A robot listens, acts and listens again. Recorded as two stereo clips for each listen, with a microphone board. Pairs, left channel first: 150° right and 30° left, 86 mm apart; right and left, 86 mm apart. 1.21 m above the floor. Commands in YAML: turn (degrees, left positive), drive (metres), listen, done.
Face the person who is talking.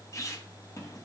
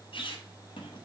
listen: true
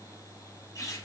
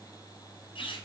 listen: true
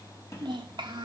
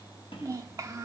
turn: 40
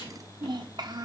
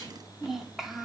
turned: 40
done: "Found it: a child speaking, straight ahead."